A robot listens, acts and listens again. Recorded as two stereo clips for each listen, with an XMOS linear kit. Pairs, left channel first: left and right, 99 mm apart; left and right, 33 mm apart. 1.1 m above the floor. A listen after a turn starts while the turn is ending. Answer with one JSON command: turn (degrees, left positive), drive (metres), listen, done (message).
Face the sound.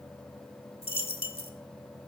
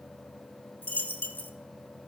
{"turn": 70}
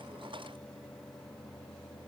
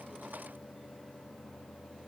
{"listen": true}
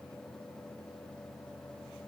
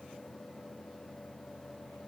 {"done": "I heard a dropped coin, but can't make it out now. It was about straight ahead or 40° left."}